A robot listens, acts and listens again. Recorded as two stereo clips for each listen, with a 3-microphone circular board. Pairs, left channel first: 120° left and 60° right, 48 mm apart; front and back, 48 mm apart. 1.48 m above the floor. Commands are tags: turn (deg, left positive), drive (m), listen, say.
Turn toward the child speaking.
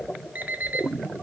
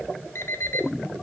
<listen/>
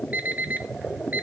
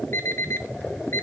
<listen/>
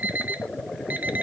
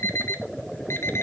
<say>I can't make out a child speaking to turn to.</say>